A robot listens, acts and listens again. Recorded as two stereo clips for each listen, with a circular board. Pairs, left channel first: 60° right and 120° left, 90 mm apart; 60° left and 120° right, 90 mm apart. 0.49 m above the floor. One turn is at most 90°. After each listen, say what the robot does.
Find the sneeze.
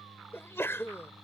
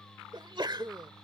Turn 90° right.
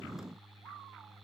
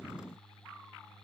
Turn 30° right.
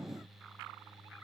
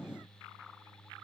Facing where the sneeze came from. I can't hear it now.